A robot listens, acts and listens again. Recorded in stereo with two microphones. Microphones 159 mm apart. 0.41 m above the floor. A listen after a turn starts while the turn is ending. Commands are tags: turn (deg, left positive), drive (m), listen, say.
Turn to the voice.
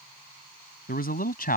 <turn deg="65"/>
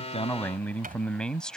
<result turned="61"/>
<say>Found it: a man speaking, straight ahead.</say>